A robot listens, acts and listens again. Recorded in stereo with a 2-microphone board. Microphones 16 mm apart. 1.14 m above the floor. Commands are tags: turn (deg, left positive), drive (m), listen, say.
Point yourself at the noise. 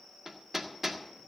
<turn deg="-30"/>
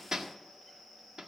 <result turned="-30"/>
<turn deg="-140"/>
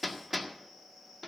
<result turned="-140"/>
<turn deg="-10"/>
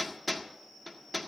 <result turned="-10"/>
<say>Facing the hammering.</say>